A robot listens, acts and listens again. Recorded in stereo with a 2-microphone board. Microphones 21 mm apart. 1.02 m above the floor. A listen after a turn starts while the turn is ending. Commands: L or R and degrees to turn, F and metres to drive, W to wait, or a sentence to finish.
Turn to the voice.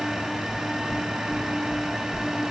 W
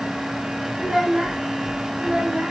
R75
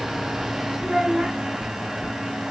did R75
R25
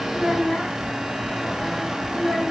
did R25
Facing the child speaking, 2 to 4 m away.